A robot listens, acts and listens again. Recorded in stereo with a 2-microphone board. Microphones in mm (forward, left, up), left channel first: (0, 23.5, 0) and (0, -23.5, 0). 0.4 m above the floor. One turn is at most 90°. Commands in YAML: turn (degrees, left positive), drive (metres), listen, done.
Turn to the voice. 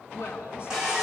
turn: 60
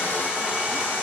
listen: true
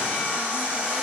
listen: true
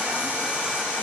done: "I heard a woman speaking, but can't make it out now. It was about straight ahead or 60° left."